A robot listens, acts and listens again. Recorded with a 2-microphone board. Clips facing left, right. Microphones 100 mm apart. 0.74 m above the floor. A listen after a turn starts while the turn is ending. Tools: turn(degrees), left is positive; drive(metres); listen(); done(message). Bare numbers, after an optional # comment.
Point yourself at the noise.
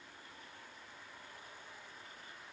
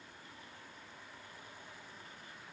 listen()
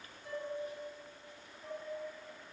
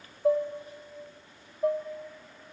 turn(-90)
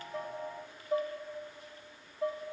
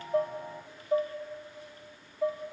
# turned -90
# So it is at 10° right.
turn(-10)
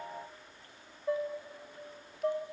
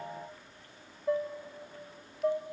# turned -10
done("Facing the dishes clattering.")